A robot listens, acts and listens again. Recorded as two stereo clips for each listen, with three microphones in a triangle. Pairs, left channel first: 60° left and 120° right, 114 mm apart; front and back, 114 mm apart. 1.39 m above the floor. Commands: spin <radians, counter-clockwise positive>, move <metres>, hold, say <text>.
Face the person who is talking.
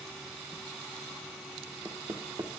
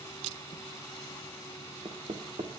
hold
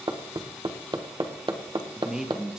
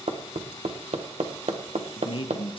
spin -0.61
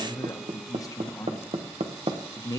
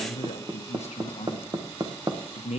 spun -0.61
say Found it: a man speaking, straight ahead.